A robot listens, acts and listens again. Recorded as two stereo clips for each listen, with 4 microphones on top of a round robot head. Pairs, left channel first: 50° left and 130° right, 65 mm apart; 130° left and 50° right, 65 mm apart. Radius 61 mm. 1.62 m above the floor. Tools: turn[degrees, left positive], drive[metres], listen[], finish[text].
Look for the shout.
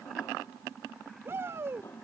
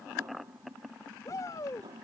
Thought: The shout: 175° left.
Action: turn[175]
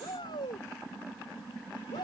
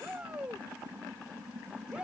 Thought: The shout is now 25° left.
Action: turn[25]
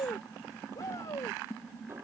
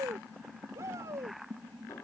Action: finish[Found it: a shout, straight ahead.]